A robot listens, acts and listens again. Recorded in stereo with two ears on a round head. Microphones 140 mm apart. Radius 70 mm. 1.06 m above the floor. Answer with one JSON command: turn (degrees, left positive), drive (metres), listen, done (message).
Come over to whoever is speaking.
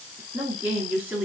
{"turn": -30}
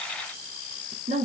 {"turn": -140}
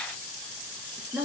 {"turn": -10}
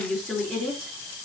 {"drive": 1.0}
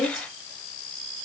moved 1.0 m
{"drive": 1.0}
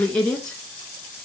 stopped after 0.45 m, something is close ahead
{"done": "Arrived at the woman speaking, straight ahead."}